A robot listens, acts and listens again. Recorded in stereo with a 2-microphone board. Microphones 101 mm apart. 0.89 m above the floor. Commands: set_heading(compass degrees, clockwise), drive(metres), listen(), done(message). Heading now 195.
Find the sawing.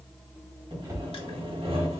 set_heading(270)
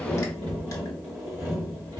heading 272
set_heading(297)
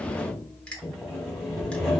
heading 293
done("Found it: sawing, straight ahead.")